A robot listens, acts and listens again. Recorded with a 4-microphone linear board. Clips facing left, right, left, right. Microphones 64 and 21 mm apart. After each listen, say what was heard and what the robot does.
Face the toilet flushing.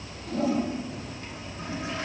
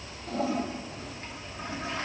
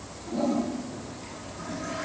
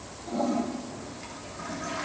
The toilet flushing: about 35° right or 145° right. Turn 35° right.
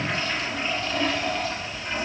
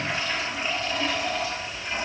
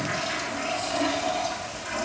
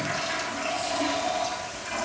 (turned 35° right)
Found it: a toilet flushing, straight ahead, 1 to 2 m away.